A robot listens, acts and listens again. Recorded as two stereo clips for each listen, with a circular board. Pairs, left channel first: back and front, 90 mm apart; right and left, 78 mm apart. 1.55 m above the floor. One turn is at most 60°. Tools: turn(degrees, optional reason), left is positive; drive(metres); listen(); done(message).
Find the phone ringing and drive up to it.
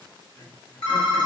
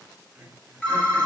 turn(degrees=-60, reason="The phone ringing: 165° right.")
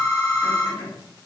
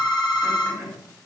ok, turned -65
turn(degrees=-60, reason="The phone ringing is now 100° right.")
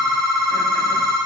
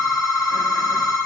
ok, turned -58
turn(degrees=-40, reason="The phone ringing is now 40° right.")
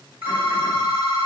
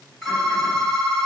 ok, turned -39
drive(metres=1.0)
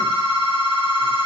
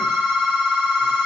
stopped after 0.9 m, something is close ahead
done("I am next to the phone ringing.")